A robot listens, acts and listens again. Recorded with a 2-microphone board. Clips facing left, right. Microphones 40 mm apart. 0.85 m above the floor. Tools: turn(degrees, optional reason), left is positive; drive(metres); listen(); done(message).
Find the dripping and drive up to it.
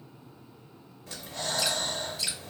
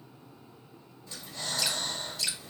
turn(degrees=30)
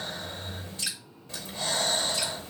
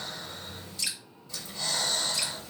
turn(degrees=145, reason="So it is at 145° left.")
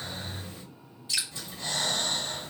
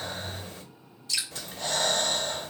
turn(degrees=20, reason="The dripping is now 20° left.")
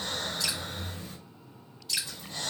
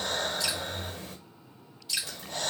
drive(metres=1.0)
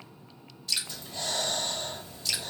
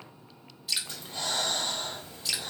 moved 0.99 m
turn(degrees=-10, reason="The dripping is now 10° right.")
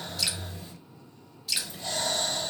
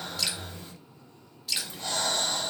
drive(metres=1.0)
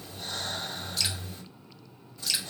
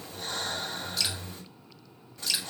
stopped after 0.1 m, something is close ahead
done("I am next to the dripping.")